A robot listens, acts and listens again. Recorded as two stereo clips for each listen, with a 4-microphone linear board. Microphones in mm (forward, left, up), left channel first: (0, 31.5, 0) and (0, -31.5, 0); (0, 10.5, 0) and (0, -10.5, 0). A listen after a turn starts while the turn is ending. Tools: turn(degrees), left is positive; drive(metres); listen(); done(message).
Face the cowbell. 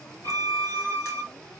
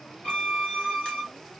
listen()
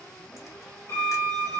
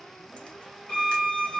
listen()
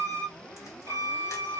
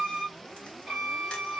done("I can't make out a cowbell, only a violin.")